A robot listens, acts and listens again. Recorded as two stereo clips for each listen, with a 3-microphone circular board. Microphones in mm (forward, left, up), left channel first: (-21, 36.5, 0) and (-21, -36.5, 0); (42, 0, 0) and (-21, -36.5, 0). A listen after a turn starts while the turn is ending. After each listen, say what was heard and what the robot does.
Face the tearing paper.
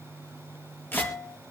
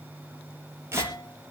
The tearing paper: 155° left. Turn 155° left.
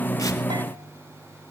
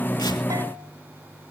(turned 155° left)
Keep listening.
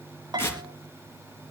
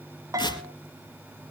The tearing paper is now 30° left. Turn 30° left.
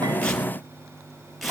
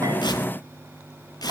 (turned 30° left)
Facing the tearing paper, 2 to 4 m away.